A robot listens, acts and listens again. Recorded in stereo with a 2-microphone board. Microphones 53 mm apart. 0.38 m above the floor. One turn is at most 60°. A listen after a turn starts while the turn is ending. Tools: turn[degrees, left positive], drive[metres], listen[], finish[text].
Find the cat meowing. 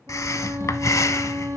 Action: listen[]
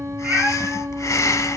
Thought: The cat meowing: about 35° right or 145° right.
Action: turn[-35]
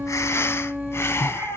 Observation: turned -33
Thought: So it is at 115° right.
Action: turn[-60]
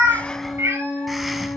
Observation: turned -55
Thought: The cat meowing is now 60° right.
Action: turn[-60]
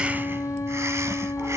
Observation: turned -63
Action: listen[]
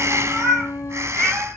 Action: finish[Facing the cat meowing, over 4 m away.]